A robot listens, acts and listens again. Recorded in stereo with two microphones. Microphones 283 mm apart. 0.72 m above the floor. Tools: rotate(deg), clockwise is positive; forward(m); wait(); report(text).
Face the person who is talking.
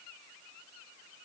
wait()
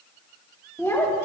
rotate(-30)
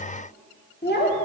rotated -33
rotate(-140)
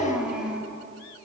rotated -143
report("Found it: a child speaking, straight ahead, 1 to 2 m away.")